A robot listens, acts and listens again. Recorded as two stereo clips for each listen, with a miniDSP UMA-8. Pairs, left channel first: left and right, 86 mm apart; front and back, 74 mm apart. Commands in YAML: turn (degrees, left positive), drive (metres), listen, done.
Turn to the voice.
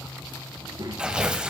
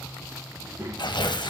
turn: -125
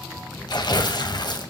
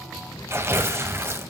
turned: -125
listen: true
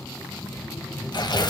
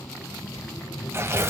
turn: 30
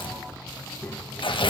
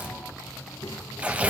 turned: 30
turn: 20
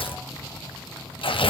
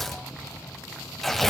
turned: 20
listen: true
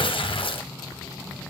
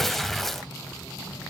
listen: true
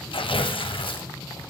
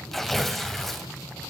done: "I heard a child speaking from this way, but can't make it out now."